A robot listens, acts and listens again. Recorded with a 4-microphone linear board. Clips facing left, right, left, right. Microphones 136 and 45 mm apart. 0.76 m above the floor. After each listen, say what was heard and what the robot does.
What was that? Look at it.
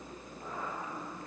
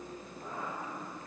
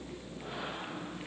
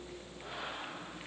Keep listening.
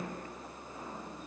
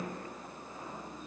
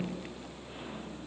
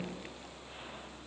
Keep listening.
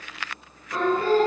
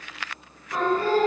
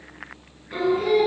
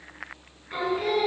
Turn 30° right.
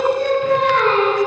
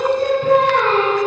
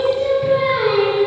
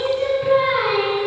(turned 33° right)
So it is at 135° right. Turn 135° right.
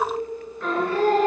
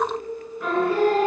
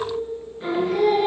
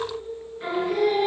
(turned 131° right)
Facing the singing, over 4 m away.